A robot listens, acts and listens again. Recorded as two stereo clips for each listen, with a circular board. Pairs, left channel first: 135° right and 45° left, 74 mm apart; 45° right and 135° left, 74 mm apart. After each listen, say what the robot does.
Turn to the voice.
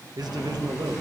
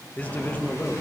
Turn 25° left.
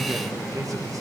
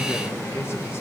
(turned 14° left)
Turn 10° left.
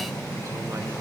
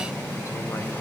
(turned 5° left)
Keep listening.
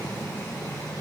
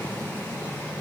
I heard a man speaking from this way, but can't make it out now.